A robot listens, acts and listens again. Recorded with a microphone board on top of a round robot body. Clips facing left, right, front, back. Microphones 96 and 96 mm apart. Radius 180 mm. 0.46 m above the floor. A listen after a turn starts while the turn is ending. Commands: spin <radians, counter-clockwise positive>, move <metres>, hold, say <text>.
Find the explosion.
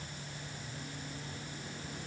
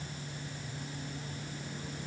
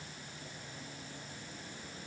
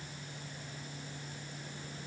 hold
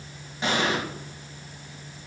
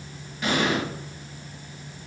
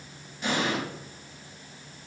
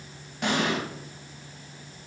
spin 2.71
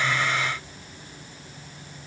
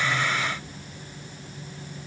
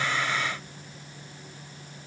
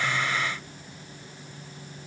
say Facing where the explosion came from. I can't hear it now.